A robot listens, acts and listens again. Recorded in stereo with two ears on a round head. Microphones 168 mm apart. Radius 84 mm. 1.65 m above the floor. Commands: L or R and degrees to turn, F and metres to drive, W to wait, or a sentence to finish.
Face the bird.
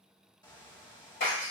L20
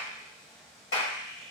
Facing the bird.